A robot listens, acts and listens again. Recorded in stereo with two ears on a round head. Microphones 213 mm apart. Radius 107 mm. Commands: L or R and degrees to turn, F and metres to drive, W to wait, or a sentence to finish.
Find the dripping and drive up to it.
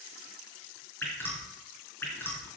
L30
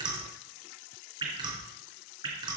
R20
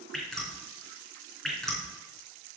F1.0
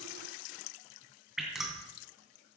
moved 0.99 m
F1.0
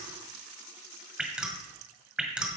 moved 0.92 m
F1.0
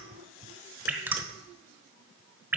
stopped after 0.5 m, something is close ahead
R10
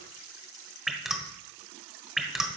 Arrived at the dripping, straight ahead.